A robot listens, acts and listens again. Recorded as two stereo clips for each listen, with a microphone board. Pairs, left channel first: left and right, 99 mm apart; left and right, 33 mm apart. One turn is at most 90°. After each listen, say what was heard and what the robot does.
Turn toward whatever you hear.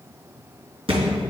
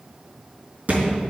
The thud: about 70° right or 110° right. Turn 70° right.
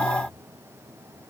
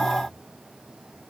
Keep listening.
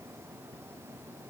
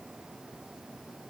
I heard a thud, but can't make it out now. It was about straight ahead or 40° right.